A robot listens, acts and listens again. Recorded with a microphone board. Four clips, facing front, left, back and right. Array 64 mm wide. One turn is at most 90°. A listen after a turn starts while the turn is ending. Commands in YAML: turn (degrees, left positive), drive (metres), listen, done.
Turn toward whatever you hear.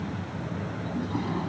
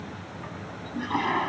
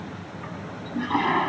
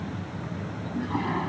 turn: 90
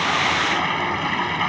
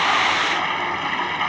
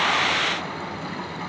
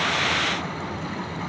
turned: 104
turn: 55
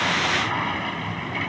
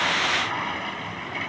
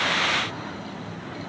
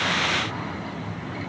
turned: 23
turn: 30
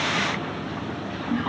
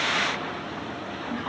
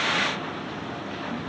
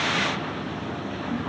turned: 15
turn: 15
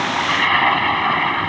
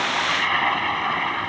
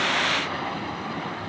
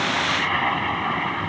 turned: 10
done: "Facing the toilet flushing."